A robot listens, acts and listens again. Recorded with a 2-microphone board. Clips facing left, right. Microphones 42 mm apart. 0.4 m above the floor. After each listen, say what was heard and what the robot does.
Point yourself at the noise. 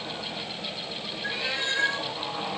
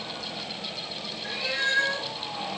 The cat meowing: about 35° left or 145° left. Turn 35° left.
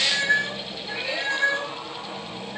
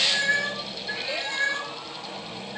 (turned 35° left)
So it is at 130° left. Turn 130° left.
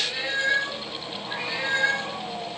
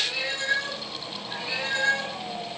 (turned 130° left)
The cat meowing is now 25° left. Turn 25° left.
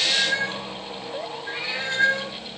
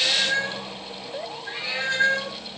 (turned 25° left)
Found it: a cat meowing, straight ahead.